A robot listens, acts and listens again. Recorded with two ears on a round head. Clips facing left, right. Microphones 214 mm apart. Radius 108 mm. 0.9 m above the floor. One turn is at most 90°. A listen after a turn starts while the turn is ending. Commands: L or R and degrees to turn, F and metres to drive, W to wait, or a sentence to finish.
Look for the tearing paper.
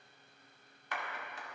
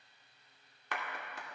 W
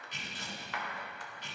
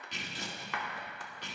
R55
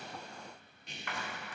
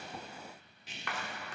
Facing the tearing paper, 2 to 4 m away.